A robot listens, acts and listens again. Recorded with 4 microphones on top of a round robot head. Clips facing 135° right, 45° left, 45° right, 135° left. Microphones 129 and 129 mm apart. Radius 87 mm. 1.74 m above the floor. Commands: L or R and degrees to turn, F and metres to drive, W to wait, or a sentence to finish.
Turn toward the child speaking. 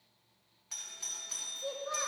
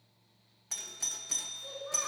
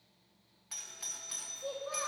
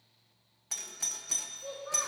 R115
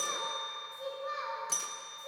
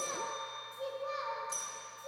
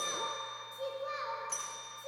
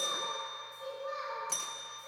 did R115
R35
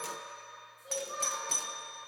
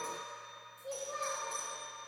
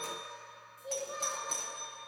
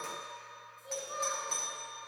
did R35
Found it: a child speaking, straight ahead.